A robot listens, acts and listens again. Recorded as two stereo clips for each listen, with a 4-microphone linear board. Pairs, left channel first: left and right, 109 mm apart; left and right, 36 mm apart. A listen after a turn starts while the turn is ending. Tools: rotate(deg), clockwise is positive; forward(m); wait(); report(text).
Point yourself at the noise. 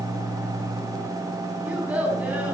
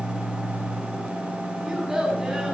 rotate(30)
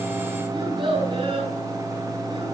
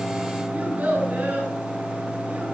rotate(135)
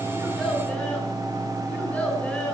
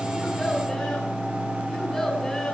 wait()
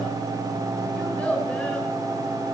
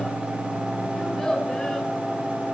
rotate(-10)
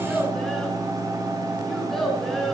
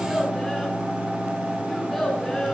report("Found it: a child speaking, straight ahead, over 4 m away.")